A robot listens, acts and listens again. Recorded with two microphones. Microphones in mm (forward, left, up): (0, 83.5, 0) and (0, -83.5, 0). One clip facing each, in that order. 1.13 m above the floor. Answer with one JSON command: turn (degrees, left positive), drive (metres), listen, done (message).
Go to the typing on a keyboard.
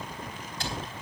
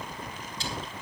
{"turn": 65}
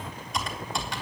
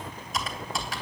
{"drive": 1.0}
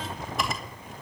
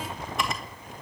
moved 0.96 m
{"drive": 1.0}
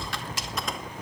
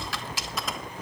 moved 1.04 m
{"drive": 1.0}
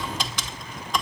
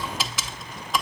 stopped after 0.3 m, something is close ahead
{"done": "Arrived at the typing on a keyboard, straight ahead."}